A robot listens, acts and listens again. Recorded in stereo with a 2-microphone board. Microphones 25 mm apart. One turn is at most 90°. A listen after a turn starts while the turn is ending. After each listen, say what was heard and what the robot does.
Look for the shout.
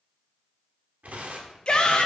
The shout: about 40° left or 140° left. Turn 40° left.
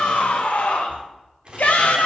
So it is at 100° left. Turn 90° left.
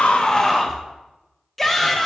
Facing the shout, 1 to 2 m away.